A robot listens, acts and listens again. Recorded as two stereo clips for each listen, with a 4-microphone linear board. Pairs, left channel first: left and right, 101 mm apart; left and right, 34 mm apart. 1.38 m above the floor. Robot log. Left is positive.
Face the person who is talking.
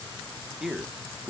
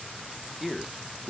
cmd yaw +30
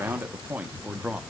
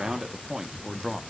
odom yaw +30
cmd yaw -30
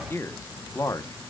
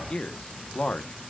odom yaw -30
note: So it is at 35° left.
cmd yaw +35
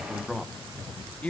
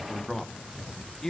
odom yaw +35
note: The man speaking is now 15° left.
cmd yaw +15
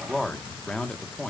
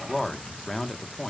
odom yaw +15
note: The man speaking is now 10° left.
cmd yaw +10
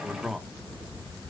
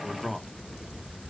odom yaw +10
end: Facing the man speaking.